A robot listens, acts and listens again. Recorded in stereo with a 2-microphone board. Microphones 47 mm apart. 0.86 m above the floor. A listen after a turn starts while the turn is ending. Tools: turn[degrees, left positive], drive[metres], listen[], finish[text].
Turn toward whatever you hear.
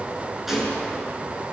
Action: turn[-30]
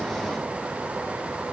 Action: listen[]
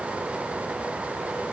Action: finish[I heard a gunshot, but can't make it out now. It was about 25° left or 145° right.]